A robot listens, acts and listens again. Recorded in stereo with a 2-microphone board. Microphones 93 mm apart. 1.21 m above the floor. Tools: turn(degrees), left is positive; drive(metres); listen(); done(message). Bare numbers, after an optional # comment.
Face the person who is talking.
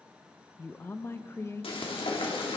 # The woman speaking: about 30° left or 150° left.
turn(30)
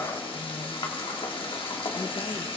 listen()
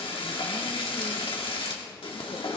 listen()
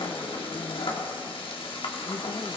done("I heard a woman speaking, but can't make it out now. It was about straight ahead or 120° left.")